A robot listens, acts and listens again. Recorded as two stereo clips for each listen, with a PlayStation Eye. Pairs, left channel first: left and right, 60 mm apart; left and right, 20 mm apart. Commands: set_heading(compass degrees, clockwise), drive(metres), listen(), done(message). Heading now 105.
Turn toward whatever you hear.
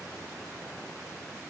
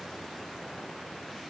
listen()
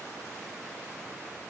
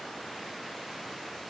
listen()
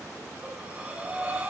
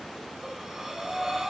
set_heading(125)
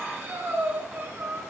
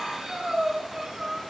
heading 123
set_heading(263)
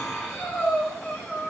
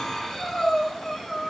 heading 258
done("Found it: breathing, straight ahead.")